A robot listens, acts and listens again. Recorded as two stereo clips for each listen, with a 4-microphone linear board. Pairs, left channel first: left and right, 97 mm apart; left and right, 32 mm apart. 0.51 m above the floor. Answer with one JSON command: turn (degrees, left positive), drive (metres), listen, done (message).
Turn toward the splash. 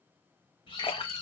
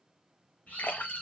{"turn": 90}
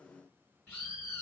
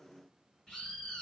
{"done": "Facing where the splash came from. I can't hear it now."}